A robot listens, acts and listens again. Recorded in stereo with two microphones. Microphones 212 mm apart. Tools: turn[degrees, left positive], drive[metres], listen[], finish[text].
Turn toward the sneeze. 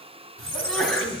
Action: turn[30]
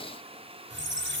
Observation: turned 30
Action: listen[]
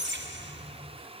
Action: finish[I heard a sneeze, but can't make it out now. It was about 30° right or 150° left.]